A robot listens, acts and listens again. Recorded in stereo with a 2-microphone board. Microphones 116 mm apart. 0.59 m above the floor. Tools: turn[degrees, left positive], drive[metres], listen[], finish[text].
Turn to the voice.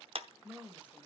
Action: turn[-30]
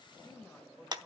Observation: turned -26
Thought: So it is at 15° left.
Action: turn[15]
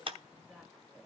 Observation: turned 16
Action: finish[Facing the woman speaking.]